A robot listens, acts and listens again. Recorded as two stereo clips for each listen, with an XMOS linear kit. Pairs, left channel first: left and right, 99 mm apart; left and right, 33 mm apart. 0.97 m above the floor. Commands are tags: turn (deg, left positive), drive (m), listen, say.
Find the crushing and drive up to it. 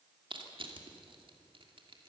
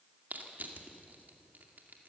<turn deg="-60"/>
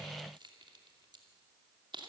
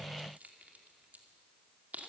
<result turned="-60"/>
<turn deg="-55"/>
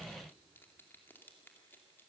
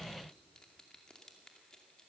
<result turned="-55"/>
<turn deg="20"/>
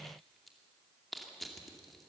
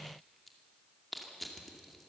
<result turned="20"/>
<drive m="1.0"/>
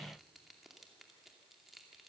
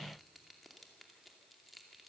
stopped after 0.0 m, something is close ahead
<say>Blocked. The crushing is further on, straight ahead.</say>